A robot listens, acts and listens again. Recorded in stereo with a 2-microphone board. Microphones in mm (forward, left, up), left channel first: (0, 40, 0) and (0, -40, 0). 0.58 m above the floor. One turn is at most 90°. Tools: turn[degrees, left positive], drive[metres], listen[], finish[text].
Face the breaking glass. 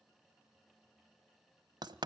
Action: listen[]
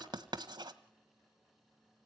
Action: listen[]
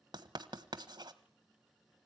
Action: finish[I can't make out breaking glass to turn to.]